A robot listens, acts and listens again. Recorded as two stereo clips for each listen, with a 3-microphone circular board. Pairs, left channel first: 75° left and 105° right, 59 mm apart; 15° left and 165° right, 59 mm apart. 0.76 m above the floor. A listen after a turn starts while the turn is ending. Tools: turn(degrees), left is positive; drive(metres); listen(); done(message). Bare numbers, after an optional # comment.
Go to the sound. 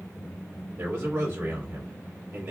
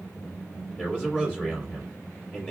# The man speaking: 50° right.
turn(-50)
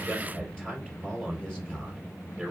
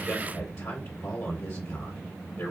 drive(1.0)
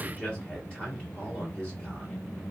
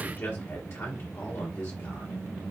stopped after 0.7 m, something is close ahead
done("Arrived at the man speaking, straight ahead.")